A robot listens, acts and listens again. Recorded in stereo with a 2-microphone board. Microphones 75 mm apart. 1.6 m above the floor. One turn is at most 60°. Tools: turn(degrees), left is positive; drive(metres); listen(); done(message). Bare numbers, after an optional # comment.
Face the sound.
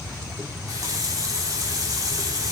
# The running tap: about 50° right or 130° right.
turn(-50)
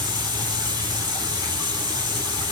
# So it is at 80° right.
turn(-60)
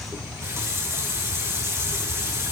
# The running tap is now 40° right.
turn(-40)
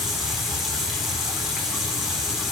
done("Facing the running tap, 2 to 4 m away.")